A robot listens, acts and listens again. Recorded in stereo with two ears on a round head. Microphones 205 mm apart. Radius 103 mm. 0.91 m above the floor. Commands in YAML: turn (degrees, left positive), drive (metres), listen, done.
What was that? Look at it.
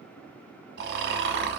turn: -45
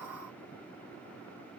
listen: true
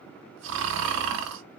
turn: -75
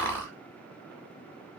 turn: 10
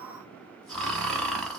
done: "Found it: snoring, straight ahead, 1 to 2 m away."